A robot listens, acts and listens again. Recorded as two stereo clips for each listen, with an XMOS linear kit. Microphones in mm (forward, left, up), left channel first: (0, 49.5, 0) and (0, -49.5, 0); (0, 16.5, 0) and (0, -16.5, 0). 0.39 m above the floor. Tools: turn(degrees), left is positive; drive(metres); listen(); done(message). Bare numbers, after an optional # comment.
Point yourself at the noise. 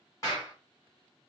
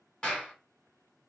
# The clap: about 35° left or 145° left.
turn(35)
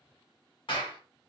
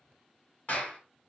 # So it is at 105° left.
turn(105)
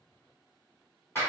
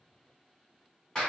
# The clap is now 25° left.
turn(25)
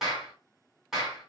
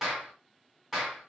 done("Found it: a clap, straight ahead.")